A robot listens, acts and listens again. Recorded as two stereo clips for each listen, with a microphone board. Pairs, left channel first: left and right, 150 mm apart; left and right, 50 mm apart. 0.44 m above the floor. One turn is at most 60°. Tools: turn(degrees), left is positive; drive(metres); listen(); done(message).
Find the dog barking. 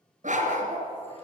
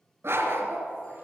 turn(degrees=-60)
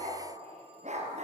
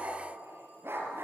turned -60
turn(degrees=-55)
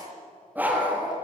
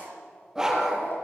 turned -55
turn(degrees=-10)
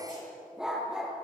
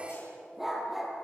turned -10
done("Found it: a dog barking, straight ahead.")